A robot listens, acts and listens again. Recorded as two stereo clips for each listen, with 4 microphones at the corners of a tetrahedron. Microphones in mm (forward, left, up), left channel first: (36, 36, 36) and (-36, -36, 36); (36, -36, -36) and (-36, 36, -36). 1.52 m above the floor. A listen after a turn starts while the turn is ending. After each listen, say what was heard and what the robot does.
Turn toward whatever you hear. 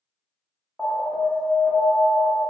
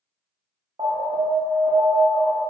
The alarm: 140° left. Turn 140° left.
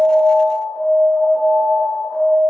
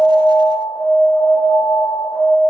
The alarm is now 40° right. Turn 40° right.
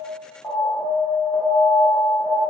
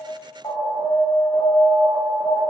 Facing the alarm.